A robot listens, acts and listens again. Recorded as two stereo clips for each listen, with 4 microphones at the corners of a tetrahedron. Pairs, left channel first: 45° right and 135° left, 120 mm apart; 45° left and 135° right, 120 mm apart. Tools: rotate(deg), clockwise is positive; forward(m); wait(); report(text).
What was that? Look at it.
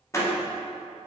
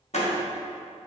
rotate(-20)
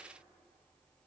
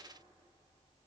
report("I heard a door slam from this way, but can't make it out now.")